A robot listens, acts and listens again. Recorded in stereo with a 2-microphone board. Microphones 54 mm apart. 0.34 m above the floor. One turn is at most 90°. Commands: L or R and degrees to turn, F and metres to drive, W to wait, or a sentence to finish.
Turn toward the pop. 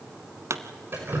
R70
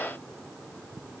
W
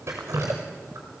I heard a pop, but can't make it out now. It was about straight ahead or 40° right.